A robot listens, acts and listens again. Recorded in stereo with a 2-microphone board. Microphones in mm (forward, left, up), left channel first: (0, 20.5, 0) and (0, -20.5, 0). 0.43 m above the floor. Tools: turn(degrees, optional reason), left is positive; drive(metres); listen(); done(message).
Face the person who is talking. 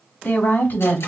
turn(degrees=60, reason="The woman speaking: about 60° left or 120° left.")
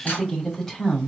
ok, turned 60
done("Facing the woman speaking.")